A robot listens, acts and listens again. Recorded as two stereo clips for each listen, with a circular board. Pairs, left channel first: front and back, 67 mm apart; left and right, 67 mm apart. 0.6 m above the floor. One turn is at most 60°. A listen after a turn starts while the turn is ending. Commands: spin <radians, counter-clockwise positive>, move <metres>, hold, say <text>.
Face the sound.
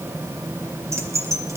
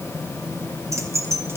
spin -1.05
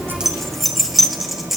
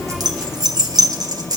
spin -1.05
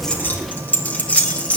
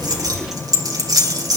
spin -1.05
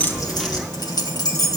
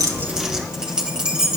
spin -0.26
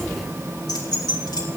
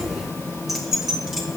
say Found it: keys jangling, straight ahead.